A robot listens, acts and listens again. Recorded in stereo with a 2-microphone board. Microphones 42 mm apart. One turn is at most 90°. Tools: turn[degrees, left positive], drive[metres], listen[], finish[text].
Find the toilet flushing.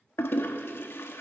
Thought: The toilet flushing: about 65° left or 115° left.
Action: turn[65]
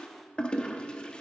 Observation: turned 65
Thought: So it is at 25° left.
Action: turn[25]
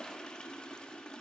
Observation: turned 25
Thought: The toilet flushing is now 25° left.
Action: turn[25]
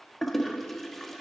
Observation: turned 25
Action: finish[Found it: a toilet flushing, straight ahead, 1 to 2 m away.]